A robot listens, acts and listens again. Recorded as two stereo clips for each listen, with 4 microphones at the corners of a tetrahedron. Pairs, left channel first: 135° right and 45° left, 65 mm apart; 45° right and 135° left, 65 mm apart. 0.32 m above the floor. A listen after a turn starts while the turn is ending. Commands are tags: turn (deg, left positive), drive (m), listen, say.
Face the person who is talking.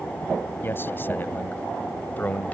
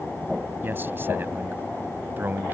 <turn deg="170"/>
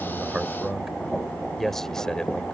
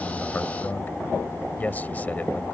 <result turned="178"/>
<turn deg="-70"/>
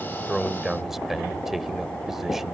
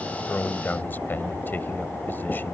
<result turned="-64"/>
<turn deg="-35"/>
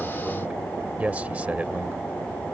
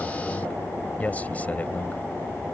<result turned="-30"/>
<say>Found it: a man speaking, straight ahead.</say>